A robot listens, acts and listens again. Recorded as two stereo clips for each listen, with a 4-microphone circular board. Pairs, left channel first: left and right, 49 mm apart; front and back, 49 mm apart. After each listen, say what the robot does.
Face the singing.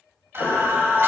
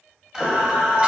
Turn 115° right.
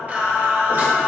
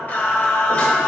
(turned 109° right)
Turn 65° right.
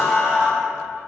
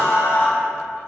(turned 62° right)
Turn 25° right.
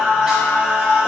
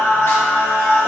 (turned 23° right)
Turn 20° right.
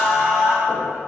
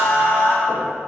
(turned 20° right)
Facing the singing.